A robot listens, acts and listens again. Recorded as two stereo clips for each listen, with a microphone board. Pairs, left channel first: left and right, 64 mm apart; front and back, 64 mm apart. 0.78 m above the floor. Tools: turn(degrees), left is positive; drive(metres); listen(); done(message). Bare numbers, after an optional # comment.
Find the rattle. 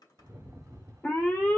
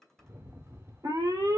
# The rattle: 130° right.
turn(-130)
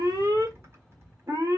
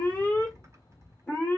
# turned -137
# The rattle is now 10° left.
turn(10)
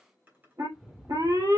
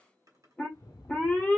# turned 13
done("Facing the rattle, under 1 m away.")